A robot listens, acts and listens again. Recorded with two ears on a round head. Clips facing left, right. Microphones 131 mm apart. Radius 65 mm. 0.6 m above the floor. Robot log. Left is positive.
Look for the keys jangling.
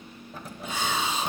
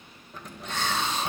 cmd yaw +30
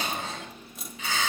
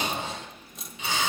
cmd yaw +30
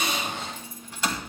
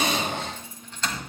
cmd yaw +30
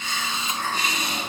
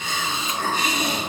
cmd idle
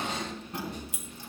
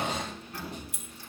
note: So it is at 160° left.
cmd yaw +160
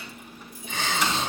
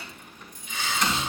end: Facing the keys jangling.